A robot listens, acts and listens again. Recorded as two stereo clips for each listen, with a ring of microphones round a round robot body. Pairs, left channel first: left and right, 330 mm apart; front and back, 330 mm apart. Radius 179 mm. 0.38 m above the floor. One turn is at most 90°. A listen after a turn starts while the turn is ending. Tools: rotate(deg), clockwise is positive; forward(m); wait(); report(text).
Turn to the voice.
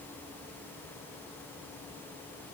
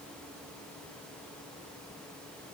wait()
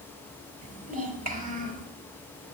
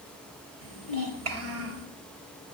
rotate(90)
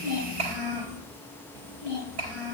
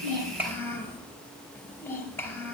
rotate(85)
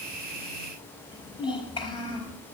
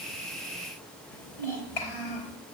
rotate(-15)
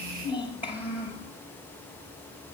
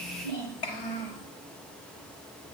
report("Found it: a child speaking, straight ahead.")